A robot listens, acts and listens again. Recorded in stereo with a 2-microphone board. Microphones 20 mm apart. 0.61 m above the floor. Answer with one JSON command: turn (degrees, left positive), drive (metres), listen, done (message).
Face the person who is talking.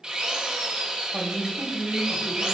{"turn": -45}
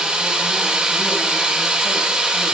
{"listen": true}
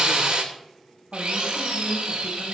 {"done": "Found it: a woman speaking, straight ahead."}